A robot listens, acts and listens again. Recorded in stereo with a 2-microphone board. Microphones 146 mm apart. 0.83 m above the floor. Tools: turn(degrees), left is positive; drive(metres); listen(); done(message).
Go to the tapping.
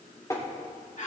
turn(degrees=25)
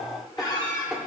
drive(metres=1.0)
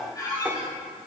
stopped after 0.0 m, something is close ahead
listen()
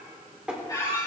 done("Something is in my way. I am facing the tapping but have not reached it.")